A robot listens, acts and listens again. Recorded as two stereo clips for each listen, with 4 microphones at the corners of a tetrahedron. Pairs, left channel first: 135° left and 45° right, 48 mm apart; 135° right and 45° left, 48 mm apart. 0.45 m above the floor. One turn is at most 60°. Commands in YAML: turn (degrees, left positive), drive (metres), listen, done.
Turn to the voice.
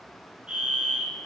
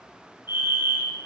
listen: true
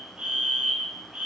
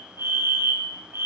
listen: true
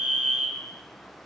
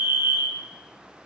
done: "I can't make out anyone speaking to turn to."